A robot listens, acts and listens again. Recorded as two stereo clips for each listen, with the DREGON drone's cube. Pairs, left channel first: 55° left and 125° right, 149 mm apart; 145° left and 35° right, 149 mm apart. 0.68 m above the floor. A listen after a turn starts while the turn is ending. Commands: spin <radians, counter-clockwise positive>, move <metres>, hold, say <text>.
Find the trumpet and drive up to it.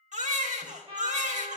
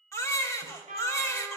spin -1.31
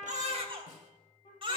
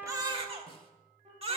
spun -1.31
move 1.0
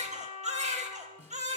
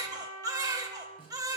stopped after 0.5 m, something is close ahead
say Blocked. The trumpet is further on, straight ahead.